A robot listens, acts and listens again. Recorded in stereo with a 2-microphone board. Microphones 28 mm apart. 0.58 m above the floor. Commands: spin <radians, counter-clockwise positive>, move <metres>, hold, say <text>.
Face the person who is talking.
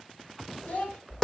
spin 1.13
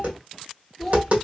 spin 0.17
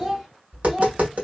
spin -0.35
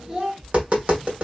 spin -0.35
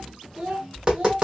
spin -0.44
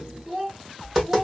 say Facing the child speaking, 1 to 2 m away.